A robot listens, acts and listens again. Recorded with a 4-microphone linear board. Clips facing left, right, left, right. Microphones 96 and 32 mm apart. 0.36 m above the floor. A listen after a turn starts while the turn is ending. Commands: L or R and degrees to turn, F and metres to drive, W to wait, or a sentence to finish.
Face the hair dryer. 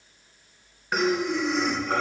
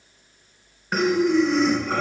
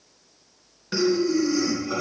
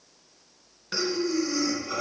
W
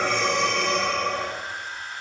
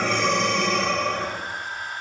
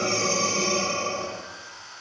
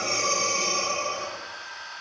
R40
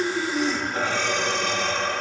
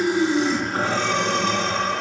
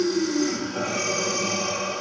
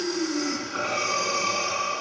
W
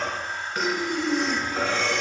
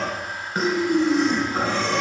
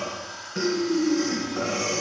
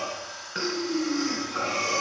Facing the hair dryer, under 1 m away.